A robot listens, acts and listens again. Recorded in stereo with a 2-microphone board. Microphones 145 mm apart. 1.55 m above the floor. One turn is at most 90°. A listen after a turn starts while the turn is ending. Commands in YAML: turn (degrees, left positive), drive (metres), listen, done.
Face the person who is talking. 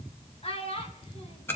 turn: 40
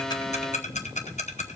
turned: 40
listen: true
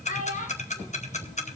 turn: 90
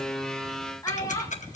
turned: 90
turn: 25
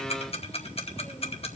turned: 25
listen: true
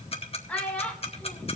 turn: 10
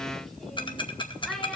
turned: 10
listen: true
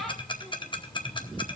listen: true
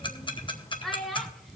done: "Found it: a child speaking, straight ahead."